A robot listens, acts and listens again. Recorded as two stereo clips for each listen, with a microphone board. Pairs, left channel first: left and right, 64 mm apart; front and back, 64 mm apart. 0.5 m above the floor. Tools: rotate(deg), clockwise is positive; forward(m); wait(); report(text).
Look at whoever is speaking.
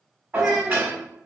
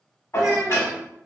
rotate(170)
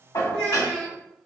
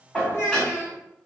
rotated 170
rotate(55)
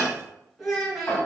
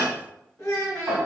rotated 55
report("Facing the child speaking.")